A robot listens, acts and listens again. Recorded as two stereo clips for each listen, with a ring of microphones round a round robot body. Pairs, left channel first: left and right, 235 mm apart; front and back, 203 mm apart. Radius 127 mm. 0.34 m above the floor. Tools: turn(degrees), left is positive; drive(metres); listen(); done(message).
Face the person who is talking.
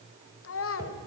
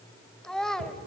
turn(degrees=85)
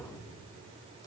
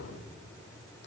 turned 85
listen()
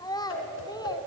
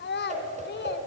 turn(degrees=20)
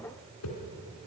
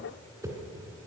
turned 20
listen()
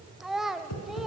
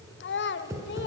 done("Facing the child speaking.")